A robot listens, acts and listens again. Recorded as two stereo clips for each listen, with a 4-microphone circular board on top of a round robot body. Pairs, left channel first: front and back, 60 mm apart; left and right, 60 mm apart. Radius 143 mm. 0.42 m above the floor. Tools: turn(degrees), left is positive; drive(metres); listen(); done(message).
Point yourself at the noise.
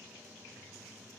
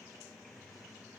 listen()
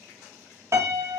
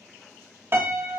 turn(degrees=-140)
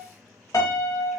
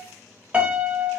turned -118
turn(degrees=-25)
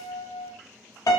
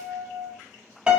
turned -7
turn(degrees=-20)
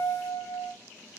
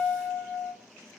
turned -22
done("Facing the piano.")